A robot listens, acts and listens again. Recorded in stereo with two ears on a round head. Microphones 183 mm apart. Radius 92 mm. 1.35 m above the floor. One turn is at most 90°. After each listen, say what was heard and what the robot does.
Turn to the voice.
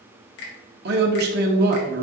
The man speaking: about 55° right or 125° right. Turn 55° right.
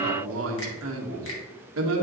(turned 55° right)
So it is at 70° right. Turn 70° right.
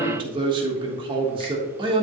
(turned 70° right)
The man speaking is now 25° right. Turn 25° right.
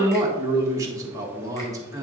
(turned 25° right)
The man speaking is now 15° right. Turn 15° right.
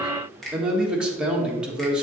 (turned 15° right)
Facing the man speaking, 1 to 2 m away.